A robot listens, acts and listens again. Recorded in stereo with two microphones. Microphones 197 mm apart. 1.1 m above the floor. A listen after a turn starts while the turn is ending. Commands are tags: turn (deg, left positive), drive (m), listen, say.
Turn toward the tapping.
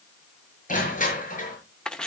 <listen/>
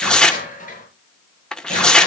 <listen/>
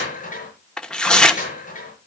<say>I can't make out tapping to turn to.</say>